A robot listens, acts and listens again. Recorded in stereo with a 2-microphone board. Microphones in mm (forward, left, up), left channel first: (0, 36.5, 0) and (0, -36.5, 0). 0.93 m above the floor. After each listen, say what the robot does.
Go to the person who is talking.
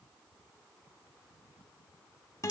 Keep listening.
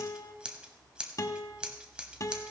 Keep listening.
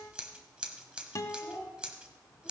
Turn 25° left.
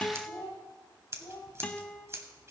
Turn 130° left.
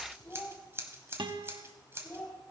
Turn 30° left.
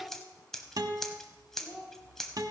Turn 15° right.
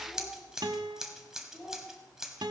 Drive 1.0 m forward.
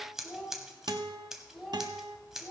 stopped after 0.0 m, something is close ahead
Something is in my way. I am facing the child speaking but have not reached it.